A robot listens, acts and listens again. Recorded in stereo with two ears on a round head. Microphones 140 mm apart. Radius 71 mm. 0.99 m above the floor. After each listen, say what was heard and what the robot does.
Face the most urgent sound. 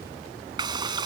Keep listening.
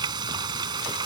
Keep listening.
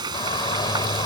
The shout: about 25° left or 155° left. Turn 25° left.
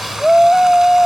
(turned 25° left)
Facing the shout.